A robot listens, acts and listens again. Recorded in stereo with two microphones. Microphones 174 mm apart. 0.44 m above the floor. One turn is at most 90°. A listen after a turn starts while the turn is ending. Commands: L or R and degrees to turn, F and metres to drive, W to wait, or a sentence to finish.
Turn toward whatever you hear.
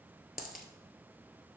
L55
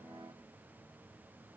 W
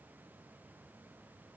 I heard a dropped coin, but can't make it out now. It was about straight ahead or 70° left.